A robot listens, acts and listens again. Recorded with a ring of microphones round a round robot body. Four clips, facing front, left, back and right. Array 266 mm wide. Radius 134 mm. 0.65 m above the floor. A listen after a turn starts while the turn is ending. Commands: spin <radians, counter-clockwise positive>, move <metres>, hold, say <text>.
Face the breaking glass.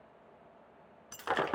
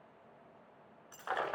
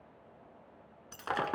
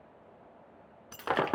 spin -1.48
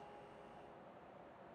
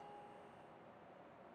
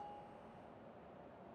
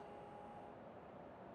say Facing where the breaking glass came from. I can't hear it now.